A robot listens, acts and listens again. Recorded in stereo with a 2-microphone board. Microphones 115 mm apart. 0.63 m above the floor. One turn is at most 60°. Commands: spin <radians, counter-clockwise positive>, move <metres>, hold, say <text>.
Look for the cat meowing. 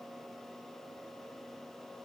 hold
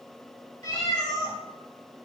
spin 0.52
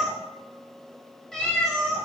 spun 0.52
say Facing the cat meowing.